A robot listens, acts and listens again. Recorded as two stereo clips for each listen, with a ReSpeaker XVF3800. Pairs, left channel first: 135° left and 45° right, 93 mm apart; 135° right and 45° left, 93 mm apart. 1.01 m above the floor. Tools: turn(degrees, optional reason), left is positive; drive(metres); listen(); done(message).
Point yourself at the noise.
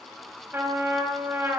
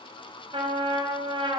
turn(degrees=20, reason="The trumpet: 20° left.")
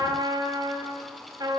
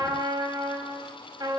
done("Found it: a trumpet, straight ahead.")